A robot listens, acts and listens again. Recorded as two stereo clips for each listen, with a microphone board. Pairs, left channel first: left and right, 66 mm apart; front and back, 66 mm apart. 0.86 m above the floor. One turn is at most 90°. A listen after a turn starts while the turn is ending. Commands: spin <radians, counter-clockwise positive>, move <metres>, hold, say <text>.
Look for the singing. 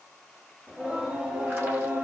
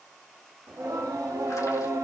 spin -1.57
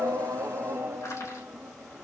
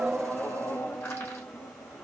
spin -0.35
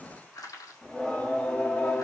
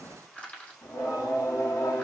spin 0.52
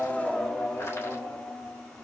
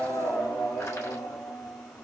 spin 0.26
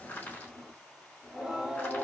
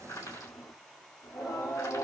say Facing the singing.